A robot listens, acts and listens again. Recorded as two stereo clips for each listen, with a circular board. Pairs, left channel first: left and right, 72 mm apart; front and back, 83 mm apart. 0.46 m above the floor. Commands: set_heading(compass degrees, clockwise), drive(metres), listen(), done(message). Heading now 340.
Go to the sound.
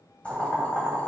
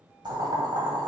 set_heading(180)
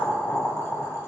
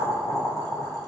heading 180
set_heading(135)
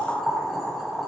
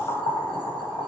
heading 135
drive(1.0)
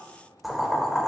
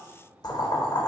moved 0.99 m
drive(1.0)
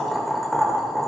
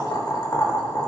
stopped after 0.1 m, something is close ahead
done("Arrived at the boiling, straight ahead.")